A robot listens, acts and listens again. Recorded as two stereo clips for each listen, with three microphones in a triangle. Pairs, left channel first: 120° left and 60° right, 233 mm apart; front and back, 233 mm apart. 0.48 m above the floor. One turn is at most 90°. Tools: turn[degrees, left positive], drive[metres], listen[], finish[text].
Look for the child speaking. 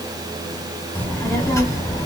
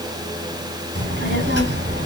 Thought: The child speaking: 175° right.
Action: turn[-90]
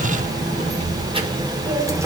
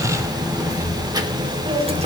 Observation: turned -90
Thought: The child speaking is now 130° right.
Action: turn[-90]
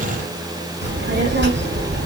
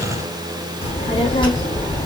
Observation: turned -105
Thought: The child speaking is now 70° right.
Action: turn[-70]
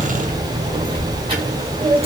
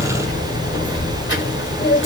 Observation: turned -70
Action: finish[Found it: a child speaking, straight ahead.]